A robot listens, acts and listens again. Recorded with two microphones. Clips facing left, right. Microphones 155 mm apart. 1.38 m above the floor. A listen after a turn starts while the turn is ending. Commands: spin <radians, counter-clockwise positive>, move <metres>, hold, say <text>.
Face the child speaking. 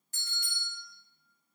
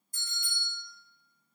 hold
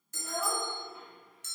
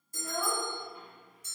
spin 0.35
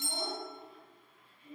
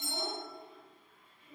spin 2.09
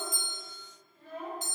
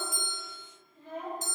spin -0.35
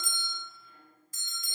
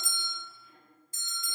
hold
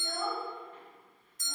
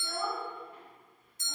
spin -0.17
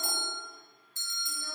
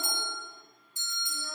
hold
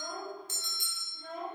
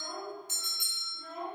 say Facing the child speaking, 2 to 4 m away.